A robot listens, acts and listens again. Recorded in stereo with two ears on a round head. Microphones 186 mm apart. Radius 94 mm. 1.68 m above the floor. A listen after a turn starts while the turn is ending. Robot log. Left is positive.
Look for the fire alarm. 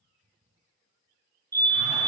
note: The fire alarm: about 15° right or 165° right.
cmd yaw -15
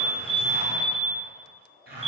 note: So it is at 150° right.
cmd yaw -150
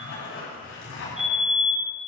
end: Facing the fire alarm.